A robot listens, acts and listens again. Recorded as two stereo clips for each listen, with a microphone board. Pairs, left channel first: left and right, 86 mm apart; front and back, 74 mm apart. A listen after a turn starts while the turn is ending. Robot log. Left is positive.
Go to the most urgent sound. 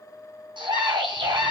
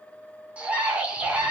note: The scream: 105° right.
cmd yaw -105
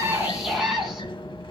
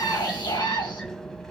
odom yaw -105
cmd fwd 1.0
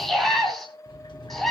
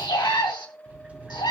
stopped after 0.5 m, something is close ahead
end: Blocked. The scream is further on, straight ahead.